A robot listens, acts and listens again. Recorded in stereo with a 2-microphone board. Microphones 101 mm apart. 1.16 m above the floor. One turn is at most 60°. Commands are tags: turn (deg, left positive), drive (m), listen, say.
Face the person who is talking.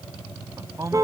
<turn deg="-30"/>
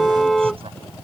<listen/>
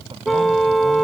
<listen/>
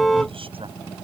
<turn deg="-60"/>
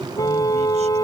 <turn deg="-60"/>
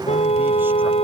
<listen/>
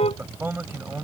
<turn deg="-20"/>
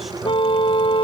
<listen/>
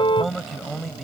<say>Found it: a man speaking, straight ahead.</say>